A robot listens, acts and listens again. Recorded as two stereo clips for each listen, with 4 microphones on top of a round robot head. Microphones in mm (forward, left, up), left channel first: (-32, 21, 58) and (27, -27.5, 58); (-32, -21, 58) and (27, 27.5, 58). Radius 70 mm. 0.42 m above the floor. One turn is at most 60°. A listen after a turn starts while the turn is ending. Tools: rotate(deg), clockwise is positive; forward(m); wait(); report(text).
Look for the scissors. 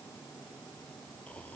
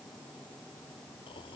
wait()
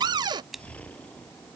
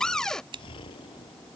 rotate(-50)
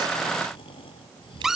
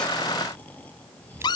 wait()
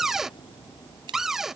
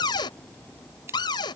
rotate(20)
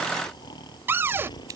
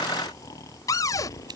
wait()
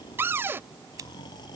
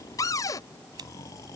report("Facing the scissors.")